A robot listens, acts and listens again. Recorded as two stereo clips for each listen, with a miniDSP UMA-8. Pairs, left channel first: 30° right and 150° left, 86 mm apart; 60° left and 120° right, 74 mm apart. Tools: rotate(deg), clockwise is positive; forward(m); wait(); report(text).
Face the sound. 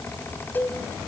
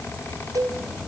rotate(95)
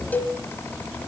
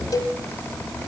rotate(-35)
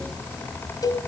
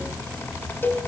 report("Facing the cowbell.")